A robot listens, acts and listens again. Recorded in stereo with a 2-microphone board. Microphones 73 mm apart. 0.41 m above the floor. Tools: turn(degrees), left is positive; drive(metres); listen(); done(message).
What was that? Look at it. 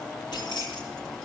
turn(degrees=90)
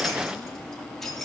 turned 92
done("Facing the keys jangling.")